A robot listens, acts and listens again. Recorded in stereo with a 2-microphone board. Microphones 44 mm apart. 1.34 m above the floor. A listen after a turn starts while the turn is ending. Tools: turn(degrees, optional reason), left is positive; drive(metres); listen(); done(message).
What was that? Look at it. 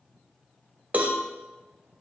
turn(degrees=-35, reason="The cowbell: about 35° right or 145° right.")
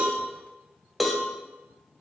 done("Found it: a cowbell, straight ahead.")